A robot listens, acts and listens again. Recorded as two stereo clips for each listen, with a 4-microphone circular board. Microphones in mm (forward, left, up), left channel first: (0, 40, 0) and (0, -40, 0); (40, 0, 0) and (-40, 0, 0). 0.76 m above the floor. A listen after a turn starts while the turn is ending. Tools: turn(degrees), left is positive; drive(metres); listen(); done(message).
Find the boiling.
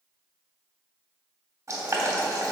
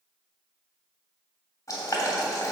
turn(degrees=-45)
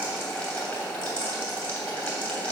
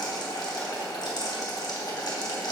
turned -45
turn(degrees=15)
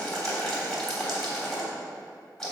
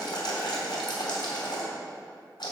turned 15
done("Facing the boiling.")